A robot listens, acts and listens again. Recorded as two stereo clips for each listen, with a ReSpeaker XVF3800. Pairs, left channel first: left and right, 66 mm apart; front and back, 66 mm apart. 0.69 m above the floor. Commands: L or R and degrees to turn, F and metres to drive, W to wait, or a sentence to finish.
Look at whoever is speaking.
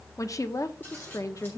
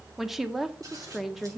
L95
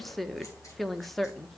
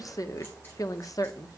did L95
Facing the woman speaking, under 1 m away.